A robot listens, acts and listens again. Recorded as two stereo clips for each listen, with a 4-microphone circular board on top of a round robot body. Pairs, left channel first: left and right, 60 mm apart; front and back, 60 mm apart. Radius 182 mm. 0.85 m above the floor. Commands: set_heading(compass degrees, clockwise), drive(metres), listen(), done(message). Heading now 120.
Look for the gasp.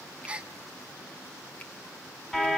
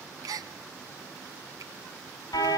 set_heading(285)
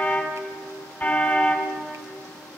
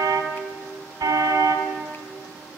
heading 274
set_heading(284)
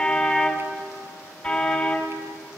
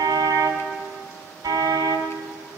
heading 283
done("Facing where the gasp came from. I can't hear it now.")